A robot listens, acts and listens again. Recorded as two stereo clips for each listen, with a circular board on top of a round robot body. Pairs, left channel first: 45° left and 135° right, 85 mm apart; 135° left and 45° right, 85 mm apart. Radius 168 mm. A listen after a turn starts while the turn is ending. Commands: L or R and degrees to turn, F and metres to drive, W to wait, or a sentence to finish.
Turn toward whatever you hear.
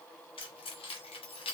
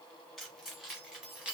L35
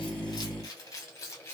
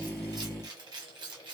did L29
R15
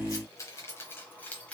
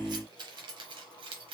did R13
R35
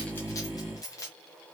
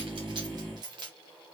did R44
R15
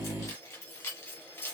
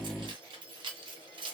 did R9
R20
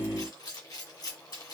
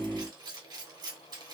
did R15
Found it: keys jangling, straight ahead.